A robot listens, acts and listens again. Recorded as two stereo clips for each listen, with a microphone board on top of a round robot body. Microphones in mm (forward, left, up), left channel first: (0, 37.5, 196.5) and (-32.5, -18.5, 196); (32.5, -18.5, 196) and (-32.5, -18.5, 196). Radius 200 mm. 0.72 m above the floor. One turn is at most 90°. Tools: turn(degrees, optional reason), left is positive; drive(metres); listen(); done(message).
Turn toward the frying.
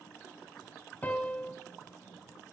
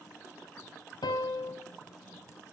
listen()
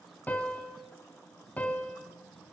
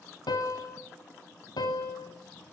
listen()
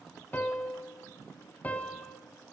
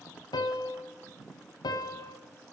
done("I can't make out frying to turn to.")